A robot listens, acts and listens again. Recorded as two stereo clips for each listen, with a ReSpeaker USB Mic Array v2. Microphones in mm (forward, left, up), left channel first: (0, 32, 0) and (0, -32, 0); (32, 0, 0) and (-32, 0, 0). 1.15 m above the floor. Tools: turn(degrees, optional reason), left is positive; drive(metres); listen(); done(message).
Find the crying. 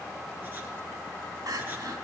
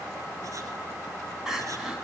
turn(degrees=-95, reason="The crying: 95° right.")
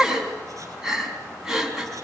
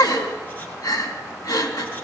done("Found it: crying, straight ahead, 2 to 4 m away.")